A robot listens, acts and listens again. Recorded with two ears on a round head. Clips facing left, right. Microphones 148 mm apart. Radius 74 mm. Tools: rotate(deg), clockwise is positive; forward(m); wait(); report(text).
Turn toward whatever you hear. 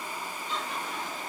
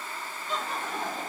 rotate(40)
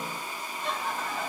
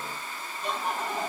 rotate(15)
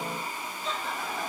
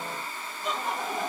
rotate(20)
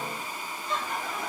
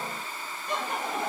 rotate(20)
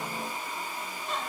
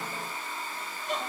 rotate(15)
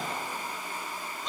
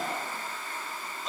report("Facing the laughter, 1 to 2 m away.")